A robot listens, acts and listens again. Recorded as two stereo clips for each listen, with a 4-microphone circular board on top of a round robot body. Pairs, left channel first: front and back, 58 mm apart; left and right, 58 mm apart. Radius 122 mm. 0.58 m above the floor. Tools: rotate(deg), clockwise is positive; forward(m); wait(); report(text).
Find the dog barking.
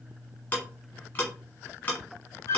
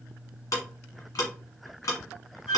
wait()
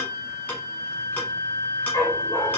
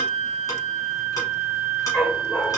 rotate(-15)
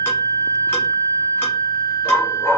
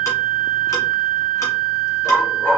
rotate(-30)
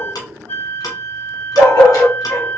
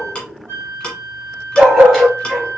rotate(10)
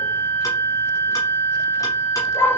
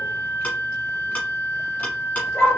report("Found it: a dog barking, straight ahead, 2 to 4 m away.")